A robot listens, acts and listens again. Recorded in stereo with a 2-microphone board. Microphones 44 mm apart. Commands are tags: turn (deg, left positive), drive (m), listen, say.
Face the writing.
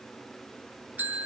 <listen/>
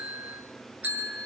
<listen/>
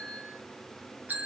<say>I can't make out writing to turn to.</say>